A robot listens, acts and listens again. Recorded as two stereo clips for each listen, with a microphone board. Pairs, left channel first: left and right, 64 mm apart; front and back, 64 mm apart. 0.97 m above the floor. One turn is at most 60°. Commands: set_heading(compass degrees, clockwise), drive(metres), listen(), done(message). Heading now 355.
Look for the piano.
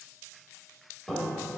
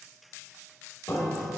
done("Found it: a piano, straight ahead.")